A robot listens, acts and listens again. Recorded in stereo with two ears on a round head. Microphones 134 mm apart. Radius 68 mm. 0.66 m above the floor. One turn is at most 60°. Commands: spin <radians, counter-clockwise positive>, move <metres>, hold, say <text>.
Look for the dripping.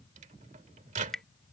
spin 0.52
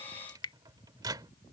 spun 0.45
spin 1.05
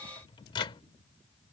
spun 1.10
spin 1.05
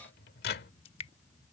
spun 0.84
spin 0.70
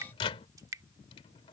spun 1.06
spin -0.35
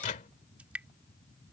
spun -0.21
spin -0.17
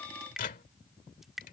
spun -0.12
say Found it: dripping, straight ahead.